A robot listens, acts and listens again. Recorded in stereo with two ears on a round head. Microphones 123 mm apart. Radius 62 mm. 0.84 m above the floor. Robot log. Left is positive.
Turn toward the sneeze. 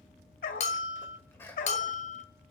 note: The sneeze: about 15° left or 165° left.
cmd yaw +15
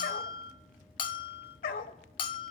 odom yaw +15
cmd idle
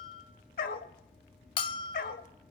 end: I heard a sneeze, but can't make it out now. It was about straight ahead or 150° left.